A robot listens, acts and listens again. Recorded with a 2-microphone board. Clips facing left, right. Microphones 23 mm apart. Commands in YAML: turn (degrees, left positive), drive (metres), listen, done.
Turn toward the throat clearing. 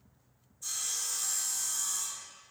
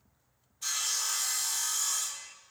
listen: true
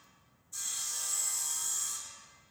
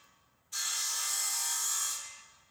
listen: true
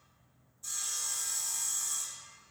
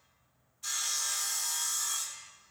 done: "I can't make out throat clearing, only sawing."